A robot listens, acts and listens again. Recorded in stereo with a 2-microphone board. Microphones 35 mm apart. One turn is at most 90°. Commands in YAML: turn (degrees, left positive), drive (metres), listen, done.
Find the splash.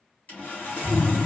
turn: 30
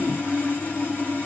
listen: true
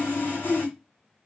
done: "I heard a splash, but can't make it out now. It was about 20° right or 140° left."